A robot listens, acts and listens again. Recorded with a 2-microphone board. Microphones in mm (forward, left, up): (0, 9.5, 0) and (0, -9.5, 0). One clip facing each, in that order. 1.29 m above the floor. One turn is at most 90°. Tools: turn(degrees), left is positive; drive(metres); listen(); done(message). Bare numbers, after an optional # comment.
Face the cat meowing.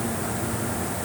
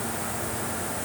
listen()
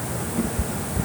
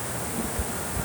turn(30)
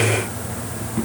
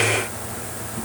# So it is at 140° left.
turn(90)
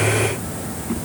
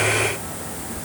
# The cat meowing is now 60° left.
turn(60)
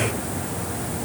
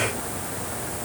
listen()
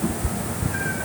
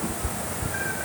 done("Found it: a cat meowing, straight ahead.")